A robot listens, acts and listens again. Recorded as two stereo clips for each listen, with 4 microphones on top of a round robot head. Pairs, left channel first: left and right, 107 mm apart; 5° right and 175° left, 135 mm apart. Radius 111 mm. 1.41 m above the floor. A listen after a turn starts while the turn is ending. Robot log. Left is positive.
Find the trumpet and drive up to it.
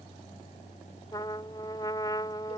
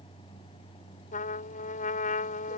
note: The trumpet: 20° left.
cmd yaw +20
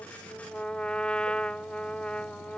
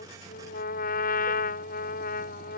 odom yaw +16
cmd fwd 1.0
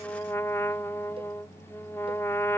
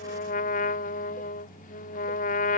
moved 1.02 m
note: The trumpet is now 15° left.
cmd yaw +15
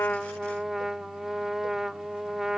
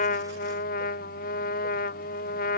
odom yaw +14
cmd fwd 1.0
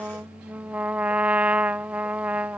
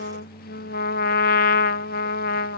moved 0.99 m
note: The trumpet is now 10° right.
cmd yaw -10
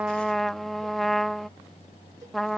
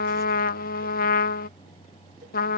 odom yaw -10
cmd fwd 1.0
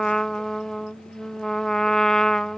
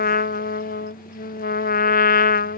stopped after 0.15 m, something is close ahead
end: Arrived at the trumpet, straight ahead.